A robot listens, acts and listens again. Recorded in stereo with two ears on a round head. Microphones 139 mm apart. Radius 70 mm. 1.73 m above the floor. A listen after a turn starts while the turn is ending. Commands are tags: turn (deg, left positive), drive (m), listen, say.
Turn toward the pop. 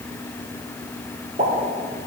<turn deg="-50"/>
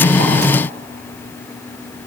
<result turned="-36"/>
<listen/>
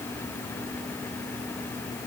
<say>I heard a pop, but can't make it out now. It was about 15° right or 90° right.</say>